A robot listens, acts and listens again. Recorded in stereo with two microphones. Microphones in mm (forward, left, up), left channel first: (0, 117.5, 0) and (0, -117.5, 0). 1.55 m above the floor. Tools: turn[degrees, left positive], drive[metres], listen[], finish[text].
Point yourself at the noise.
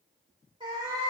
Action: turn[-30]
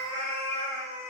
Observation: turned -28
Thought: The cat meowing: about 25° right or 155° right.
Action: turn[-25]
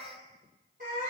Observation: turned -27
Thought: So it is at 145° right.
Action: turn[-145]
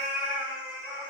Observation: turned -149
Thought: The cat meowing is now 10° right.
Action: turn[-10]
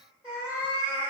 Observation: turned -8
Thought: The cat meowing is now 10° right.
Action: turn[-10]
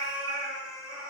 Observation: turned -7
Action: finish[Facing the cat meowing.]